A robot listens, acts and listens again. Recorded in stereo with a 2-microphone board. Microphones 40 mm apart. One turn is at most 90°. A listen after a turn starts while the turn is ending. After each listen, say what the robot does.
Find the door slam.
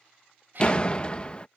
Turn 25° left.
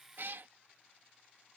Keep listening.
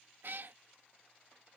I heard a door slam, but can't make it out now. It was about straight ahead or 130° left.